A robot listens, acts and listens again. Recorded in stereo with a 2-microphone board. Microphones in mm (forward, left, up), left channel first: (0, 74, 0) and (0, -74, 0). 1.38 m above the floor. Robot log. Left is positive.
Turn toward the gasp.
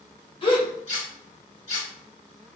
note: The gasp: about 35° left or 145° left.
cmd yaw +35
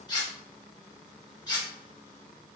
cmd idle
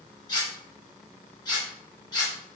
end: I heard a gasp, but can't make it out now. It was about straight ahead or 110° left.